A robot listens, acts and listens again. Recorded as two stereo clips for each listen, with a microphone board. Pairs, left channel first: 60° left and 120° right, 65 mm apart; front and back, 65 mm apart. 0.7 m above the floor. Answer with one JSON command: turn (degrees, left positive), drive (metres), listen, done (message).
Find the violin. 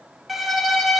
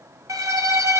{"turn": 150}
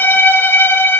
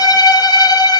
{"done": "Found it: a violin, straight ahead, 1 to 2 m away."}